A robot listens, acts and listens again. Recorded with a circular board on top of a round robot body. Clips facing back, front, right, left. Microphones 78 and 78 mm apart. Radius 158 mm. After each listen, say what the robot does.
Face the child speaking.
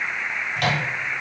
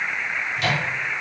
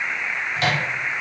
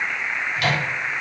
Keep listening.
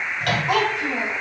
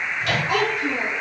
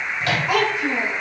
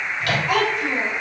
Turn 165° right.
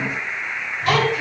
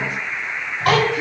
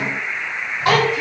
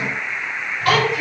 Turn 30° right.
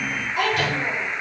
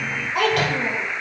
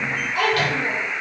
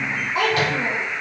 Turn 25° left.
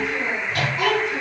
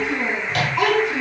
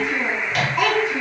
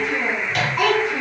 Facing the child speaking, over 4 m away.